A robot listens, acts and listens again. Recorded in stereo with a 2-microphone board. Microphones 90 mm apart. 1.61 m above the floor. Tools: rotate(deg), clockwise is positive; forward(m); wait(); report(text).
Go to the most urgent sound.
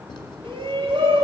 rotate(65)
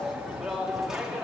forward(1.0)
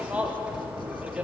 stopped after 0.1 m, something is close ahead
rotate(10)
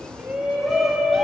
report("Blocked. The shout is further on, straight ahead.")